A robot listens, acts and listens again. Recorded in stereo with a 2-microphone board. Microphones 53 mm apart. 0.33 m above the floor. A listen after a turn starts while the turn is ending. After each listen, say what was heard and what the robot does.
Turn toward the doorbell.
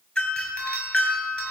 The doorbell: about 20° left or 160° left. Turn 20° left.
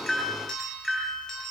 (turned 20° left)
Facing the doorbell.